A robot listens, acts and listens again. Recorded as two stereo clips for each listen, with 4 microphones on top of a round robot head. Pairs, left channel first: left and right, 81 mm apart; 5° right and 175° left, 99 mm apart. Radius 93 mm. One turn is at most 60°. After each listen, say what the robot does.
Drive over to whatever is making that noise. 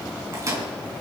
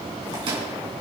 Turn 60° right.
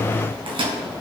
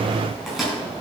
Turn 60° right.
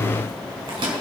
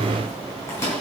Turn 60° right.
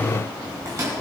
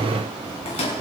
Turn 30° right.
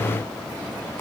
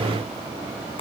Keep listening.
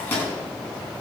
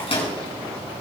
Turn 20° left.
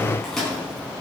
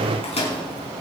Drive 1.0 m forward.
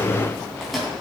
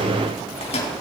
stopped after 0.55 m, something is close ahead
Something is in my way. I am facing the microwave but have not reached it.